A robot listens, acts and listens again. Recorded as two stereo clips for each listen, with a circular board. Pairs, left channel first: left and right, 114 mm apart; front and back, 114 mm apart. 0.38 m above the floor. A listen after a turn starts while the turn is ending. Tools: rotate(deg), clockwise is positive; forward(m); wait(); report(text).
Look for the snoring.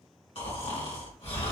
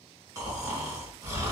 rotate(-120)
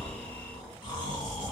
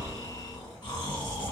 rotate(-45)
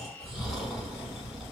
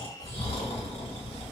report("Found it: snoring, straight ahead, 1 to 2 m away.")